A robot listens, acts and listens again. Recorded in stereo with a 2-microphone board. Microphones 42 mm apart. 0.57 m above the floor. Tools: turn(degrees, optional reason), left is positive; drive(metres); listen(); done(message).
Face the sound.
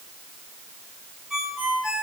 turn(degrees=-30)
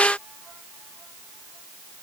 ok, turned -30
listen()
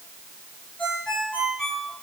turn(degrees=20, reason="So it is at 20° left.")
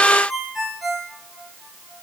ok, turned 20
done("Facing the ringtone, over 4 m away.")